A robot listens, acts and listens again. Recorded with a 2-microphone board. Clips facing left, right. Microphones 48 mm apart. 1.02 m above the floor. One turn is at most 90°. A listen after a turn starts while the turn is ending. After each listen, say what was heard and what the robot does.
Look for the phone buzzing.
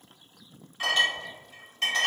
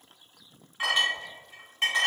Keep listening.
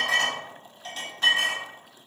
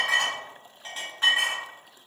Keep listening.
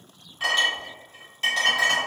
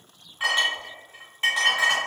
I can't make out a phone buzzing, only a clink.